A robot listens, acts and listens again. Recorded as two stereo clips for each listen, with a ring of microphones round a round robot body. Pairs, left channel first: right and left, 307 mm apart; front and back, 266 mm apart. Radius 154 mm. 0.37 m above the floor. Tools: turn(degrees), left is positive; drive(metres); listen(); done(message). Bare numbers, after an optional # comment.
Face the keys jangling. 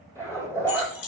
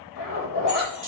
# The keys jangling: 75° right.
turn(-75)
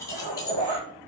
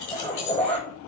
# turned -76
# The keys jangling is now 15° right.
turn(-15)
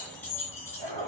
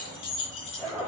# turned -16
# The keys jangling is now 10° right.
turn(-10)
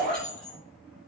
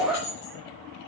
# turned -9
done("Facing the keys jangling.")